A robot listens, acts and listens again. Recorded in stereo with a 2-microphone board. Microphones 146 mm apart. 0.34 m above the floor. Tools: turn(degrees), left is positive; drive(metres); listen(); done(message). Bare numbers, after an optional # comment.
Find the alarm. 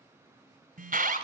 # The alarm: about 70° right or 110° right.
turn(-70)
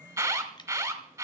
# So it is at 20° right.
turn(-20)
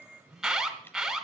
done("Found it: an alarm, straight ahead.")